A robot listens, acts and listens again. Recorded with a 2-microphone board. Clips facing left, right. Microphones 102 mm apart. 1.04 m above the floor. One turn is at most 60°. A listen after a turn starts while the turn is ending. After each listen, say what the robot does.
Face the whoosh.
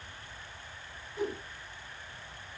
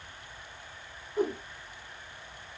Turn 55° right.
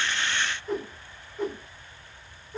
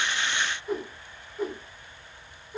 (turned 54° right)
Found it: a whoosh, straight ahead.